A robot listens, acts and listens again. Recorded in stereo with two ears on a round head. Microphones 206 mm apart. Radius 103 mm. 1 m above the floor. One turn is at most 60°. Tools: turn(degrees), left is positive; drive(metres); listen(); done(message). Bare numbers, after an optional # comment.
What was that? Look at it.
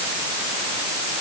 listen()
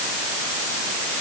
listen()
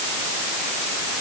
done("I can't make out anything to turn to.")